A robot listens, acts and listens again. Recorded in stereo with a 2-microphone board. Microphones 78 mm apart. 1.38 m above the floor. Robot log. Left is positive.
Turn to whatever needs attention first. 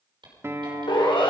cmd yaw +90
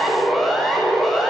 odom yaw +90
end: Facing the siren.